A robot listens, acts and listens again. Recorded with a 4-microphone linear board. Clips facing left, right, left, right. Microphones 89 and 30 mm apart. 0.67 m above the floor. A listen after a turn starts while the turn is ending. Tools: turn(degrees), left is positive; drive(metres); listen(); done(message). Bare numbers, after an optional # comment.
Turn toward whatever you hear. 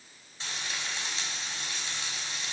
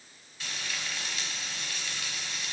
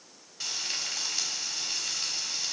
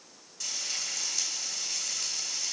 # The frying: about 30° left or 150° left.
turn(30)
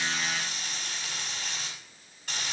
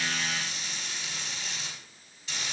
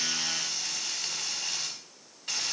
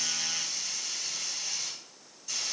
# So it is at 120° left.
turn(120)
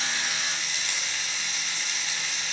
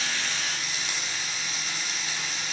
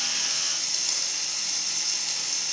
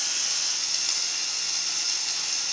# The frying is now 10° right.
turn(-10)
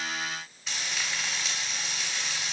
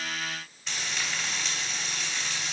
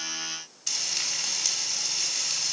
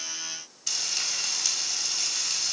done("Found it: frying, straight ahead.")